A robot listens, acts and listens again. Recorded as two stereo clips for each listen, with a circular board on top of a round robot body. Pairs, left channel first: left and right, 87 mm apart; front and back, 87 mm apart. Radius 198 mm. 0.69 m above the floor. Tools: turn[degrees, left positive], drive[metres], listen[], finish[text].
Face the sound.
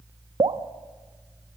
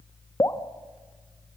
Thought: The dripping: 55° right.
Action: turn[-55]
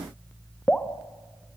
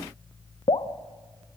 Thought: The dripping is now 10° left.
Action: turn[10]
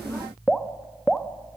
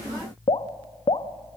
Action: finish[Found it: dripping, straight ahead.]